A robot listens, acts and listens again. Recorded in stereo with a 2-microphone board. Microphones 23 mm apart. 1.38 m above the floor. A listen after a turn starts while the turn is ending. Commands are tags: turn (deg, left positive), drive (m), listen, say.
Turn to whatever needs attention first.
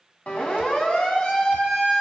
<turn deg="75"/>
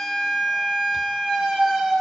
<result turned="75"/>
<say>Facing the siren.</say>